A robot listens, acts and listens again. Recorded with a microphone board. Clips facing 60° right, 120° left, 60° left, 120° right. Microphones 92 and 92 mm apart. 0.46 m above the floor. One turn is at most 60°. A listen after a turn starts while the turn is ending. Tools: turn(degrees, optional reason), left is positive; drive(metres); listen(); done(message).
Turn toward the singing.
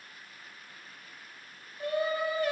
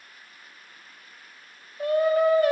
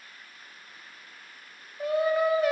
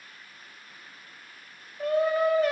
turn(degrees=60, reason="The singing: 145° left.")
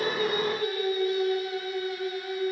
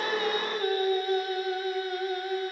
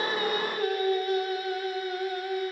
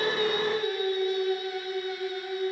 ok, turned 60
turn(degrees=60, reason="The singing is now 85° left.")
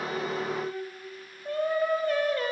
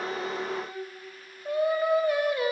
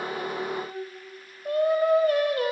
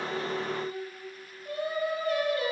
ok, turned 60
turn(degrees=40, reason="The singing is now 40° left.")
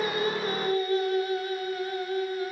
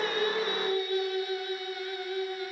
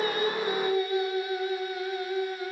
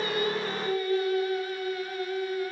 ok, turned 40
turn(degrees=-10, reason="The singing is now 10° right.")
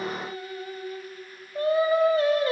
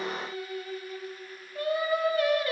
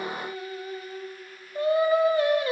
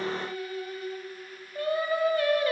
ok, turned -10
done("Found it: singing, straight ahead, 1 to 2 m away.")